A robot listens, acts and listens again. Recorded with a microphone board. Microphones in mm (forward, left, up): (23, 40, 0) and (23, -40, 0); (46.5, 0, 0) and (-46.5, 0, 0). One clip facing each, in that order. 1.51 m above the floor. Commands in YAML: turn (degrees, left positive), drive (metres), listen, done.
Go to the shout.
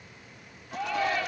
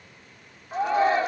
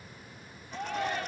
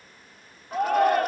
turn: -150
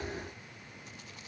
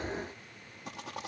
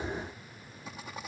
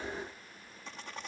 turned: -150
listen: true
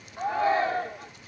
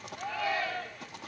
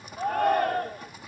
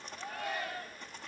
turn: 35
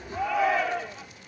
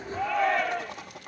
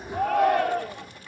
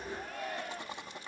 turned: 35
drive: 1.0
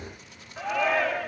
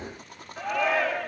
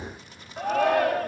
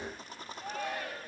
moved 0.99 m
drive: 1.0
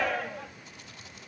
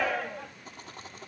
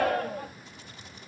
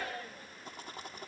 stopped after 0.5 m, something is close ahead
done: "Something is in my way. I am facing the shout but have not reached it."